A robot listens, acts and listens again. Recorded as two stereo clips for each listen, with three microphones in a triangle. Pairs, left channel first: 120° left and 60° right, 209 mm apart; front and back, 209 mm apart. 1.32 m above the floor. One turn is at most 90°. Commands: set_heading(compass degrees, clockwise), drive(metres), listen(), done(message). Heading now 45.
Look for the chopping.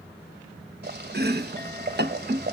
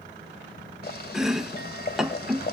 set_heading(135)
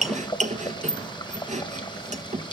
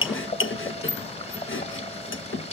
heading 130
done("Facing the chopping, 1 to 2 m away.")